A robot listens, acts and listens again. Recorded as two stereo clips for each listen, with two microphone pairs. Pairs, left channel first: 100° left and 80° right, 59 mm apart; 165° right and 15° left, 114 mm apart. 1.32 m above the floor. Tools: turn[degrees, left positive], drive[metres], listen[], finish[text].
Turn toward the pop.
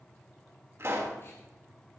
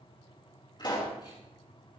Thought: The pop: 120° right.
Action: turn[-120]
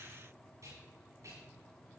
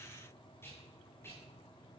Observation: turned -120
Action: finish[Facing where the pop came from. I can't hear it now.]